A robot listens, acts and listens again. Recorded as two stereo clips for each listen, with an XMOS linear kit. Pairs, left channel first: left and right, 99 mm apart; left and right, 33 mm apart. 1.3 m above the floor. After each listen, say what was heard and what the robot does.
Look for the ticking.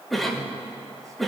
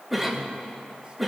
Keep listening.
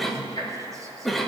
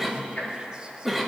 The ticking: about 40° left or 140° left. Turn 40° left.
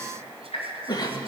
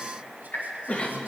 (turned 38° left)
So it is at 95° left. Turn 95° left.
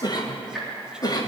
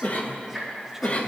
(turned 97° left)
Facing the ticking, 2 to 4 m away.